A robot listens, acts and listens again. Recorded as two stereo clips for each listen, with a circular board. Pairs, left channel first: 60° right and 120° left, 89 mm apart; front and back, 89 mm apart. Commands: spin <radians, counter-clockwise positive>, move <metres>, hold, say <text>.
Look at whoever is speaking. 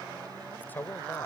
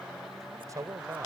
spin -2.27
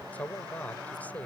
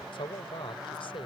spin 0.17
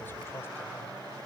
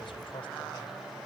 hold
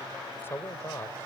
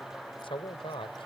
say Found it: a man speaking, straight ahead.